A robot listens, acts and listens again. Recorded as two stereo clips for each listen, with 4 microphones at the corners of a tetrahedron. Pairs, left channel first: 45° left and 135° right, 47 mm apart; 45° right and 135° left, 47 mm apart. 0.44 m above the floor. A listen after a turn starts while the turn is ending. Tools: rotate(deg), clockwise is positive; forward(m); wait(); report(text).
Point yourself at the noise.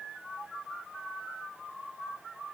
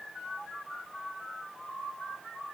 wait()
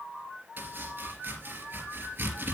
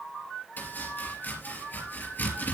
rotate(90)
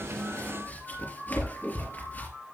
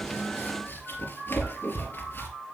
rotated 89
report("Found it: chopping, straight ahead, 2 to 4 m away.")